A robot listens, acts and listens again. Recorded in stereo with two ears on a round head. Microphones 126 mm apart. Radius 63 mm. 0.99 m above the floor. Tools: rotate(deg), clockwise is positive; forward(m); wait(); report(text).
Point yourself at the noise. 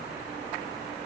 wait()
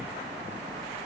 wait()
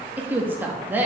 rotate(30)
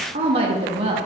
rotate(135)
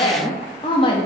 rotate(-40)
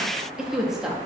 report("Facing the woman speaking.")